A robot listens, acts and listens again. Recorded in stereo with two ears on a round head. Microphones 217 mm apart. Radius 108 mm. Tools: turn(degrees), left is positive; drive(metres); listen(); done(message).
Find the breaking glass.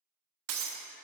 turn(degrees=-60)
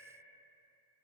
listen()
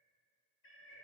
done("I heard breaking glass, but can't make it out now. It was about straight ahead or 60° right.")